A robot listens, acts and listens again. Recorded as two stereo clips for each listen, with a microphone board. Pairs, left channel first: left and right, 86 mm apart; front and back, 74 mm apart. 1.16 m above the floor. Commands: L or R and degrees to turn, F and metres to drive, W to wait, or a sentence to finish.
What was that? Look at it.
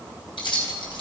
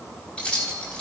L75
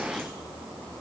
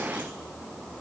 W
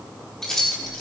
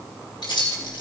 Found it: keys jangling, straight ahead, 2 to 4 m away.